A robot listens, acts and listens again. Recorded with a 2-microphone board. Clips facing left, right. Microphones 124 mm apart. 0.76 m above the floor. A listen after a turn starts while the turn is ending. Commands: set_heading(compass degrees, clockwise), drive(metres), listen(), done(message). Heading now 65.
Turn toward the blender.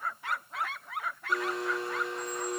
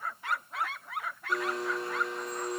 set_heading(35)
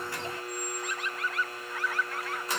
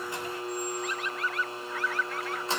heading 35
set_heading(65)
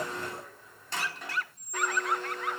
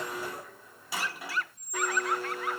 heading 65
set_heading(75)
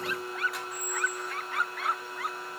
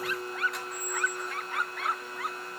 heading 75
done("Facing the blender, 1 to 2 m away.")